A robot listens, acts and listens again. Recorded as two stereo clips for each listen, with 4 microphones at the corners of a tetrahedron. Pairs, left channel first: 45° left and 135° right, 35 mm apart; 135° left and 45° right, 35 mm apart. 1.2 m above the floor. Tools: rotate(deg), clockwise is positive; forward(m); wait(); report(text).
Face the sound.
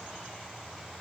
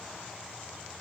wait()
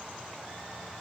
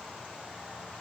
wait()
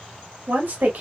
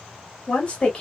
rotate(160)
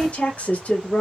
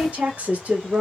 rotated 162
report("Found it: a woman speaking, straight ahead, 1 to 2 m away.")